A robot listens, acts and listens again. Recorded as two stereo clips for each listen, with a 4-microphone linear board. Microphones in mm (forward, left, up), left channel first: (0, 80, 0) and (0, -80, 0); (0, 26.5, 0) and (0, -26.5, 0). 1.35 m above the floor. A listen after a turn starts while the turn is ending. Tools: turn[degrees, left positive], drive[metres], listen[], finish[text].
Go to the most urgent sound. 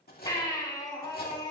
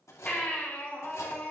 Thought: The baby crying: about 25° left or 155° left.
Action: turn[25]
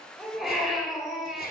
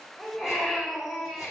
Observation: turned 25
Action: drive[1.0]
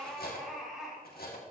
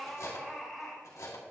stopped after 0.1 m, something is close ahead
Action: finish[Blocked. The baby crying is further on, straight ahead.]